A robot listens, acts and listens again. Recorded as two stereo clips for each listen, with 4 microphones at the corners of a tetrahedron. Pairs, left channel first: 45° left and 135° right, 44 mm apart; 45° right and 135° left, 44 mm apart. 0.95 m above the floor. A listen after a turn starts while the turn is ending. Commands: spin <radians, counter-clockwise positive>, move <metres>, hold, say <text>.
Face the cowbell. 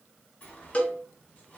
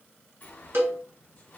spin 1.83
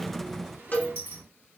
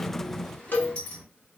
say Facing the cowbell.